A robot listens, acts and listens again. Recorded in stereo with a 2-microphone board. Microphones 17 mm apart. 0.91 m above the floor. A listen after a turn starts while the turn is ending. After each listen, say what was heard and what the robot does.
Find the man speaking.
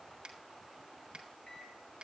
Keep listening.
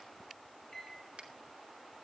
Keep listening.
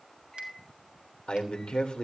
The man speaking: about 75° left or 105° left. Turn 75° left.
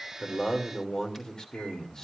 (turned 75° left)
So it is at 30° left. Turn 30° left.
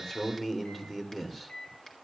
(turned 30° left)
Facing the man speaking.